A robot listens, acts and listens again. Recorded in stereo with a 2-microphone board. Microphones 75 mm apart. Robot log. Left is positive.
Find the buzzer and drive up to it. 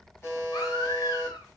note: The buzzer: about 30° left or 150° left.
cmd yaw +30
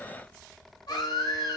cmd idle
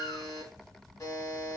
note: So it is at 115° left.
cmd yaw +115
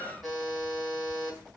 cmd fwd 1.0
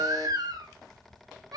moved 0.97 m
cmd idle
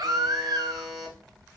cmd fwd 1.0
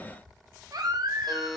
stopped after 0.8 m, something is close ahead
end: Arrived at the buzzer, straight ahead.